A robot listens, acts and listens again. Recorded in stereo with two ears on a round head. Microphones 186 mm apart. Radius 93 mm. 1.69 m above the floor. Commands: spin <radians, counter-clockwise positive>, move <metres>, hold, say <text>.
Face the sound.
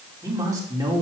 spin -0.26
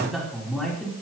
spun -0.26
spin 0.52
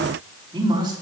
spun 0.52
spin -0.44
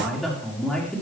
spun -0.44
say Facing the man speaking, over 4 m away.